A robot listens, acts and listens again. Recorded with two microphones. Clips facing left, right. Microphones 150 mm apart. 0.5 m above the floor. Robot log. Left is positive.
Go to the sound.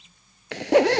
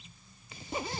cmd yaw +90
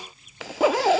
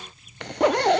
cmd fwd 1.0
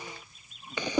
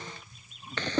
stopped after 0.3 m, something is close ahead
note: The zipper is now 10° left.
cmd yaw +10
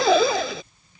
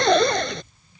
end: Something is in my way. I am facing the zipper but have not reached it.